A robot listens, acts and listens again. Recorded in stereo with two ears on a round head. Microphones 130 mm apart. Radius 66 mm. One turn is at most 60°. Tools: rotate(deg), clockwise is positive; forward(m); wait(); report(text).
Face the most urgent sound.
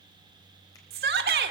rotate(60)
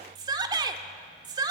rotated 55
rotate(30)
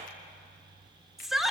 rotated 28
report("Found it: a shout, straight ahead.")